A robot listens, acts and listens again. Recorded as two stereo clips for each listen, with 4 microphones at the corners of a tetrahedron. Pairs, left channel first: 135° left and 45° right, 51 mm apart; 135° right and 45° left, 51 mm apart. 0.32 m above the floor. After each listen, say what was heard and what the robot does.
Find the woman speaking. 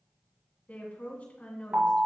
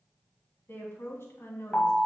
The woman speaking: 165° right. Turn 165° right.
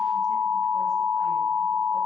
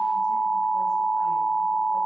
Keep listening.
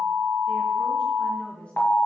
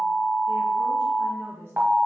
The woman speaking is now 70° left. Turn 70° left.
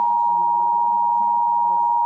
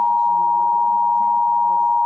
Keep listening.
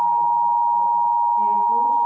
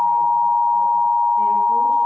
Keep listening.
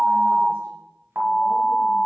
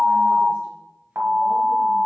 Facing where the woman speaking came from. I can't hear it now.